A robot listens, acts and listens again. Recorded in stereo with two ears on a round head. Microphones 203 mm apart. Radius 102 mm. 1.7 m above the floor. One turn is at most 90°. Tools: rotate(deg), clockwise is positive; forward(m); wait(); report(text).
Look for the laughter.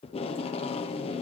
wait()
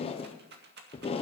wait()
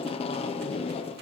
report("I can't make out laughter to turn to.")